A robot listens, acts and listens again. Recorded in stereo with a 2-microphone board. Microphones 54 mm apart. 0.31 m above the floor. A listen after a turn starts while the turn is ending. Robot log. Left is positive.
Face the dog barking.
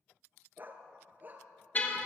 note: The dog barking: about 35° right or 145° right.
cmd yaw -35
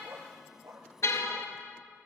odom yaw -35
note: So it is at 115° right.
cmd yaw -115
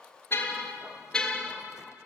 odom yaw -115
cmd idle
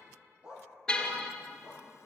note: The dog barking is now 20° right.
cmd yaw -20
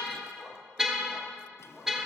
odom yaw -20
cmd idle
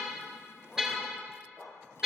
end: Found it: a dog barking, straight ahead, over 4 m away.